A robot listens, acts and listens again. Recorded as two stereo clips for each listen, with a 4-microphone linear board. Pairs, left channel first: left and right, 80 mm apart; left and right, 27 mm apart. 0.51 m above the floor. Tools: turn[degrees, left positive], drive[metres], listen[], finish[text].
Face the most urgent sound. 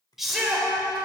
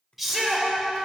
Action: turn[-30]
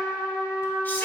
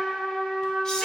Action: listen[]
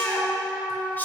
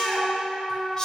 Action: listen[]
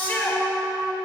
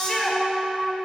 Thought: So it is at 30° left.
Action: turn[30]
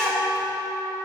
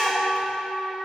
Action: finish[Facing the shout.]